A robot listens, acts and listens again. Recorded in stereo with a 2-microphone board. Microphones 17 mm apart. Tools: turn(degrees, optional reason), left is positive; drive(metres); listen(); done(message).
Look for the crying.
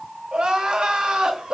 turn(degrees=-60, reason="The crying: about 60° right or 120° right.")
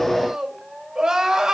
turn(degrees=-55, reason="So it is at 55° right.")
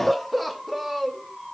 done("Found it: crying, straight ahead, under 1 m away.")